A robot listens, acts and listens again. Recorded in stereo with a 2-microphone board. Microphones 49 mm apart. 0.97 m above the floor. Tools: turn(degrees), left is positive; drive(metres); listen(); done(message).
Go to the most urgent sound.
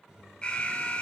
turn(degrees=25)
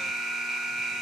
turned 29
drive(metres=1.0)
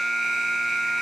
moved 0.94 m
turn(degrees=-10)
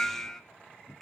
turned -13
drive(metres=1.0)
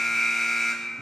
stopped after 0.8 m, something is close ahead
done("Arrived at the alarm, straight ahead.")